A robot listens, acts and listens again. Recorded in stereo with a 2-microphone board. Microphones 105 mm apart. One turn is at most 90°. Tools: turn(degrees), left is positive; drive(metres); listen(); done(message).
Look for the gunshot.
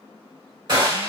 turn(degrees=-45)
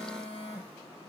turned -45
listen()
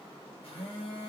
done("I heard a gunshot, but can't make it out now. It was about straight ahead or 90° right.")